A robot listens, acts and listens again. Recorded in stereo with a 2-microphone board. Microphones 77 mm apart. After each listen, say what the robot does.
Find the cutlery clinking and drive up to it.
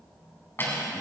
Turn 30° left.
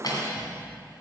Turn 115° left.
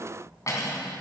Turn 45° left.
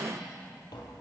Keep listening.
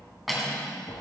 Drive 1.0 m forward.
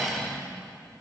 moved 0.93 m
Drive 1.0 m forward.
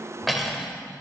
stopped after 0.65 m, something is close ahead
Arrived at the cutlery clinking, straight ahead.